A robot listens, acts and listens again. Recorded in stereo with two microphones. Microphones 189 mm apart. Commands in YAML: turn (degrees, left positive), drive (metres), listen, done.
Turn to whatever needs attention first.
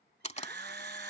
turn: -60
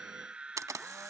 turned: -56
done: "Found it: a scream, straight ahead."